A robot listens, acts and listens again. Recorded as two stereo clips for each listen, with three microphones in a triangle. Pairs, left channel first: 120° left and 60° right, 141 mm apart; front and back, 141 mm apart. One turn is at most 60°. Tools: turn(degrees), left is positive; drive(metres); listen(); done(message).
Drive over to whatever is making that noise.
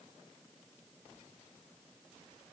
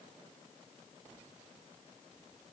listen()
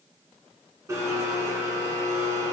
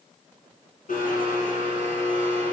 drive(metres=1.0)
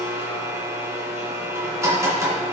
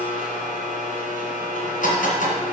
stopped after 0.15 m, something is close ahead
done("Blocked. The blender is further on, straight ahead.")